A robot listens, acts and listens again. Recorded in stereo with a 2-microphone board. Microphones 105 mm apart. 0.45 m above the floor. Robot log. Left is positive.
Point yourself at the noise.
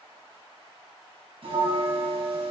note: The bell: about 70° right or 110° right.
cmd yaw -70
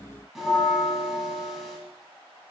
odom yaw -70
end: Found it: a bell, straight ahead.